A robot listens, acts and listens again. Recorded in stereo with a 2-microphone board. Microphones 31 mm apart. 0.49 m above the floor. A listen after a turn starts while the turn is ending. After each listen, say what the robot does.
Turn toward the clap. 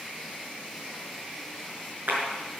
Turn 75° right.
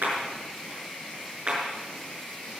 Turn 30° right.
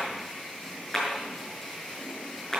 Turn 10° left.
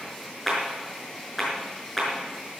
Found it: a clap, straight ahead, over 4 m away.